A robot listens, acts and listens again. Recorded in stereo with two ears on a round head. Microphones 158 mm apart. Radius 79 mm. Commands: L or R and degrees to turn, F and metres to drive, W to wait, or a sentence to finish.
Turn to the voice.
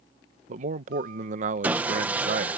R45
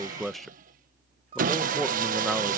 Facing the man speaking.